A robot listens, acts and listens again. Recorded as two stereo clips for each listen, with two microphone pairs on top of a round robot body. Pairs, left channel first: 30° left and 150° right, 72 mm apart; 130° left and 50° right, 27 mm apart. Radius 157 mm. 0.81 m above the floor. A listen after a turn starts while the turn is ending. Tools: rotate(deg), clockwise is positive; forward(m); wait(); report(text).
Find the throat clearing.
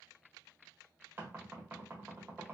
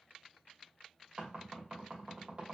wait()
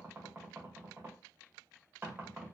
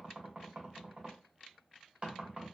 wait()
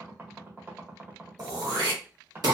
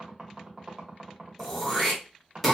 rotate(150)
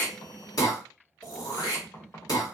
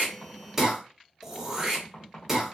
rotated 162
rotate(-10)
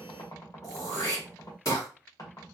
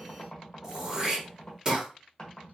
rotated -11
report("Found it: throat clearing, straight ahead, 1 to 2 m away.")